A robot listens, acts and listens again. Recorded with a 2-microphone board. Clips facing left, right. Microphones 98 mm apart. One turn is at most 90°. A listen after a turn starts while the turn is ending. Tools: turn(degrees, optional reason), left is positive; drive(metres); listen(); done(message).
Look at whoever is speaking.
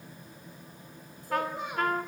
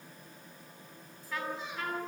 turn(degrees=60, reason="The child speaking: about 60° left or 120° left.")
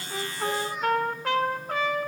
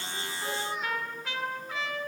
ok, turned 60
listen()
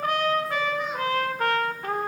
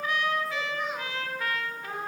listen()
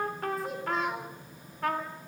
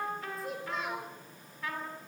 done("Found it: a child speaking, straight ahead, over 4 m away.")